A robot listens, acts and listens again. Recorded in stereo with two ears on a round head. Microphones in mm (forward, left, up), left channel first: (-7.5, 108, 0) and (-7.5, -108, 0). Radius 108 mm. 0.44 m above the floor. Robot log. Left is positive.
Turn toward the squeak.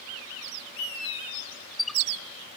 cmd yaw +30
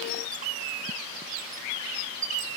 note: So it is at 35° right.
cmd yaw -35
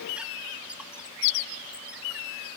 cmd idle
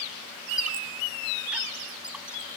end: Found it: a squeak, straight ahead.